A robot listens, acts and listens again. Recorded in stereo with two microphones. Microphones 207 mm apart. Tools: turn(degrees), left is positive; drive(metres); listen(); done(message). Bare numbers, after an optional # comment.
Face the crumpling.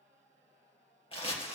# The crumpling: about 25° left or 155° left.
turn(25)
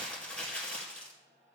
done("Found it: crumpling, straight ahead.")